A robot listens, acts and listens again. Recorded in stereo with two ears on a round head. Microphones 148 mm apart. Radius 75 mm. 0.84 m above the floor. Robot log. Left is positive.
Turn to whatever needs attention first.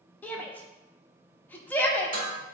cmd yaw +30
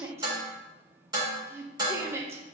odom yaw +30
note: So it is at 15° right.
cmd yaw -15
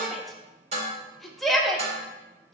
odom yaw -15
end: Found it: a shout, straight ahead.